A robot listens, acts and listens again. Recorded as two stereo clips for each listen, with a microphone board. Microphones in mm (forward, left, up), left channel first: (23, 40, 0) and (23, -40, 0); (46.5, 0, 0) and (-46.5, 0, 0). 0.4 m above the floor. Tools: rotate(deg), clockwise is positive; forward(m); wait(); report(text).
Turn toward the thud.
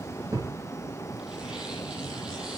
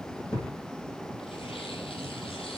rotate(45)
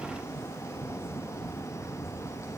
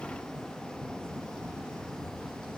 report("Facing where the thud came from. I can't hear it now.")